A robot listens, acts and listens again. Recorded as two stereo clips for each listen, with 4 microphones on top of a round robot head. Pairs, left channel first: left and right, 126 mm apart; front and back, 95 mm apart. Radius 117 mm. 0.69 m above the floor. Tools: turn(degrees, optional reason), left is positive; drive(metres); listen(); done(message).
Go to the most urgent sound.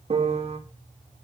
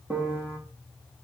listen()
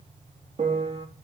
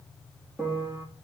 listen()
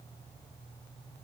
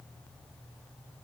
done("I can't make out anything urgent to turn to.")